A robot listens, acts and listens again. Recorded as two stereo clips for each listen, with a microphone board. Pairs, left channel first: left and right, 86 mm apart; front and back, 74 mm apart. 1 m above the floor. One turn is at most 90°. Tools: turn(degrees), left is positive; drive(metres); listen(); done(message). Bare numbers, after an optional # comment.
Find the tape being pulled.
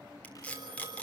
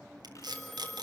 # The tape being pulled: 165° left.
turn(90)
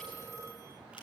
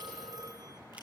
# Nothing new. It was at 75° left.
turn(75)
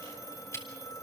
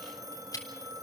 # The tape being pulled is now 35° left.
turn(35)
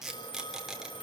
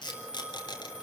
done("Found it: tape being pulled, straight ahead, 2 to 4 m away.")